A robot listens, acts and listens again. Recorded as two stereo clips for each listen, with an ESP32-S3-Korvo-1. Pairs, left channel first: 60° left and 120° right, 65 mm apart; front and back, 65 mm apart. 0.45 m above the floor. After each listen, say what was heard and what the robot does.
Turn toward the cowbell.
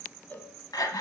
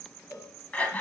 Found it: a cowbell, straight ahead.